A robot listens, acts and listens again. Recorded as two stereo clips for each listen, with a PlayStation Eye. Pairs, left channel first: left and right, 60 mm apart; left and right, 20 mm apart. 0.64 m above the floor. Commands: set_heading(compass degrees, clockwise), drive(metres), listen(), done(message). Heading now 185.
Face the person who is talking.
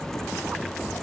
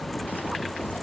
listen()
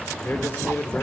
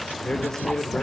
set_heading(155)
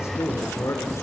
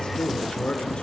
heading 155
set_heading(40)
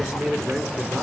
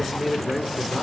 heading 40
set_heading(60)
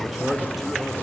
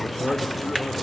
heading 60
done("Facing the man speaking, 2 to 4 m away.")